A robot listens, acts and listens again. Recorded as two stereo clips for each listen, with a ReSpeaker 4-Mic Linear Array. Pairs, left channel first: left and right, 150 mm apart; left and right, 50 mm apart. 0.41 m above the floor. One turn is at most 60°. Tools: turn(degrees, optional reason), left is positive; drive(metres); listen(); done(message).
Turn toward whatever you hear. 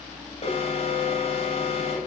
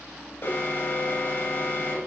turn(degrees=45, reason="The alarm: about 45° left or 135° left.")
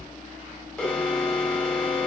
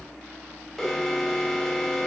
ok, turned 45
done("Facing the alarm.")